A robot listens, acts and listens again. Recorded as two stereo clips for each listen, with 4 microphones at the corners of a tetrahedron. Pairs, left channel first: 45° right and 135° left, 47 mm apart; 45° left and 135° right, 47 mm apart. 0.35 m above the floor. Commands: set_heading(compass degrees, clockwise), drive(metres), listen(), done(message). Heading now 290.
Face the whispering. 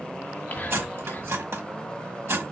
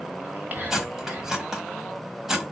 set_heading(20)
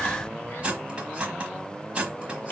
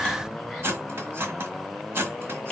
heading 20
listen()
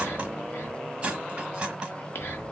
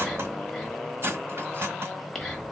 set_heading(55)
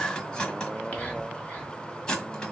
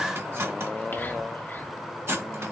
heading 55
listen()
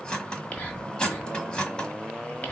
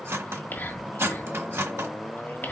set_heading(45)
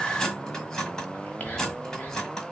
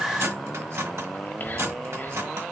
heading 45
done("Found it: whispering, straight ahead.")